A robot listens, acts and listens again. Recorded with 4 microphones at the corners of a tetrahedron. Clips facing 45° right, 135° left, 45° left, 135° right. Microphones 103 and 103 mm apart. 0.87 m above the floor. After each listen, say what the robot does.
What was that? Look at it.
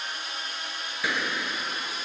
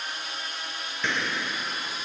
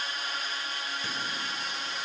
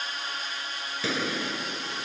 Turn 130° right.
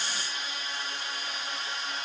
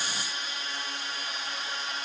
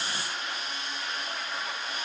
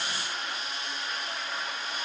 I heard a gunshot from this way, but can't make it out now.